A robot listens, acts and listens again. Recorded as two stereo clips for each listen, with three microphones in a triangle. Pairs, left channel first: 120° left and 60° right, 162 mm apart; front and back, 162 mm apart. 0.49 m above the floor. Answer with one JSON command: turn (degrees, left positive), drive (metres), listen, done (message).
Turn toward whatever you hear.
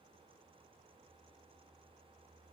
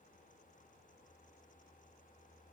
{"listen": true}
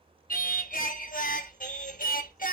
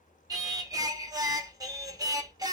{"turn": 115}
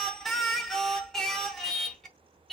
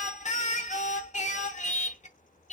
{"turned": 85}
{"turn": 30}
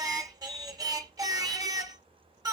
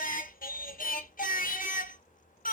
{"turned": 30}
{"done": "Found it: singing, straight ahead, under 1 m away."}